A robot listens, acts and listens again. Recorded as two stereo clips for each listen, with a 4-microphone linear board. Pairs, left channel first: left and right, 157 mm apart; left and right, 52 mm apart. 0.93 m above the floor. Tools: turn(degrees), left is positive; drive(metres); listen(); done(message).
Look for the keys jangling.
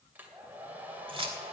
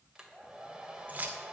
turn(degrees=-35)
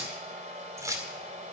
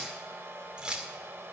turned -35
turn(degrees=-20)
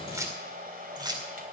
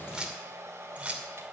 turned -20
turn(degrees=-25)
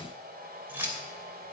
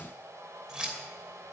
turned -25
turn(degrees=-15)
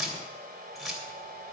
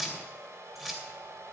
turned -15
done("Facing the keys jangling.")